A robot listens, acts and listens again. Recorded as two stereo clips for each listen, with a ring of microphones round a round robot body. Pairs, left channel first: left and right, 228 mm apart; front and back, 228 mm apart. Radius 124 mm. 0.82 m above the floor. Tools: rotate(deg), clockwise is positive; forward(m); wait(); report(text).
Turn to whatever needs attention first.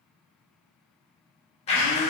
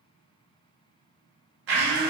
wait()
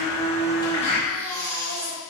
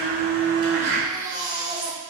rotate(105)
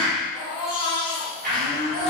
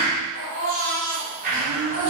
rotate(30)
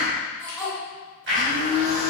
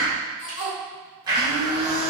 report("Facing the baby crying.")